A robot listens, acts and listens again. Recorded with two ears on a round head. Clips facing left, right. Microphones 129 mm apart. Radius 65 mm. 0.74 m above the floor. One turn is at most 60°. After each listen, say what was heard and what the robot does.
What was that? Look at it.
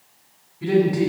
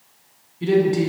The man speaking: about 30° right or 150° right. Turn 30° right.
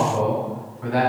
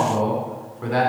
So it is at 115° right. Turn 60° right.
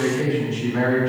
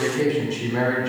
The man speaking is now 50° right. Turn 50° right.
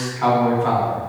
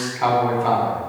The man speaking is now 15° right. Turn 15° right.
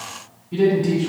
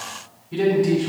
Facing the man speaking, 2 to 4 m away.